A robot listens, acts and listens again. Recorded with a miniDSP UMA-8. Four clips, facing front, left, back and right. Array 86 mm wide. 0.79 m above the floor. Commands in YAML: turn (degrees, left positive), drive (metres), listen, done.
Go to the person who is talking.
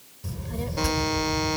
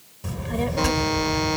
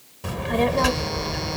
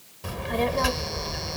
turn: -165
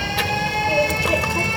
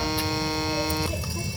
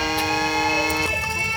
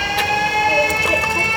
turn: -55
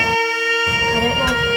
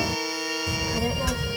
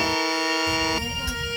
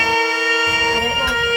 turn: -20
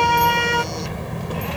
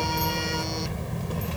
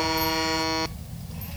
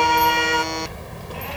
drive: 1.0
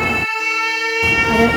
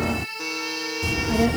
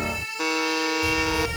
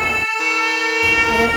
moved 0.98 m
turn: -15
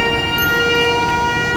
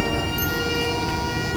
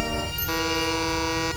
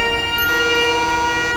drive: 1.0
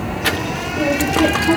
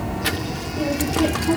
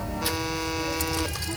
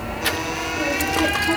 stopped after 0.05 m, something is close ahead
done: "Arrived at the child speaking, straight ahead."